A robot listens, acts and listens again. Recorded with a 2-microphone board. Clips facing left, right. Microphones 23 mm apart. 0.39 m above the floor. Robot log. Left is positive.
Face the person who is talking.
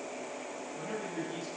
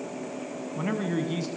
note: The man speaking: about 45° right or 135° right.
cmd yaw -45
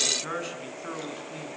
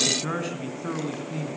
end: Facing the man speaking, over 4 m away.